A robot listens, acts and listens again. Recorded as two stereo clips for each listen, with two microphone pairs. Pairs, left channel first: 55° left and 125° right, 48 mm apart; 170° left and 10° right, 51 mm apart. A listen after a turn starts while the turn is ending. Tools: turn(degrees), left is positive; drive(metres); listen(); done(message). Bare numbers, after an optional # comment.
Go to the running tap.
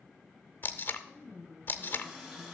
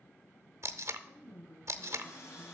# The running tap: 140° left.
turn(140)
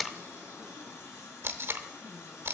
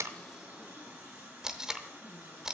# The running tap is now 40° left.
turn(40)
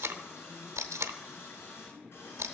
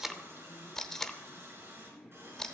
# The running tap is now 20° left.
turn(20)
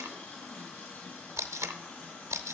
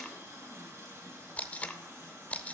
drive(1.0)
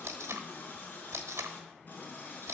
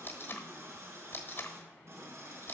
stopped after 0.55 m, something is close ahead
done("Something is in my way. I am facing the running tap but have not reached it.")